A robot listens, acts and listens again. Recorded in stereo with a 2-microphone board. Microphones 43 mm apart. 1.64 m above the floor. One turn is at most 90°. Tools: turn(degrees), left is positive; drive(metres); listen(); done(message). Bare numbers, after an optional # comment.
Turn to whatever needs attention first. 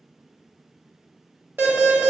# The alarm: about 70° right or 110° right.
turn(-70)
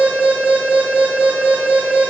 # So it is at 45° right.
turn(-45)
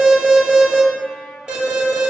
# The alarm is now 25° right.
turn(-25)
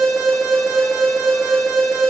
# The alarm is now 20° right.
turn(-20)
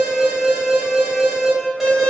done("Facing the alarm.")